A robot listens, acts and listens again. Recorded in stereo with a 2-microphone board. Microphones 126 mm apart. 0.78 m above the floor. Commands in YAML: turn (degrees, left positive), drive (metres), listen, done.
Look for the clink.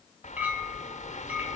turn: -30
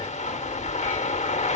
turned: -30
listen: true
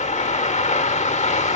listen: true
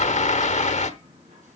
done: "I heard a clink, but can't make it out now. It was about 20° left or 140° right."